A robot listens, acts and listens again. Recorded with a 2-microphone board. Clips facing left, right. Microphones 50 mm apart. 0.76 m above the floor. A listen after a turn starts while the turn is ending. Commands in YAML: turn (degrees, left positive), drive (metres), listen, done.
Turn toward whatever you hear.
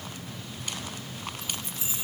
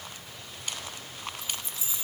turn: 55
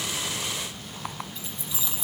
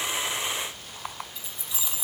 done: "Facing the keys jangling."